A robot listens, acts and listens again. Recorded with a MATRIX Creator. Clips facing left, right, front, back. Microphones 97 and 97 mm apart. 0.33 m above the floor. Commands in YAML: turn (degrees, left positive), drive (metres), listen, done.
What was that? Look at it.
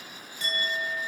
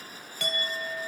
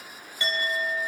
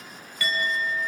turn: -65
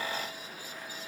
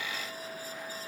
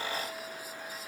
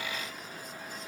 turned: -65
listen: true
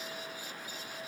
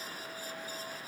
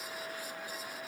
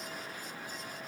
listen: true
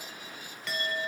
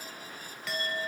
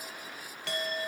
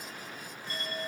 done: "Facing the clink."